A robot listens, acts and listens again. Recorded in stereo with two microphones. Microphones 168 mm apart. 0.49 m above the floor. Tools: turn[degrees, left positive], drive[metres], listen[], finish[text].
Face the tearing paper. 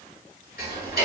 Action: listen[]
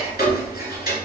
Action: listen[]
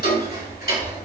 Action: finish[I can't make out tearing paper, only ticking.]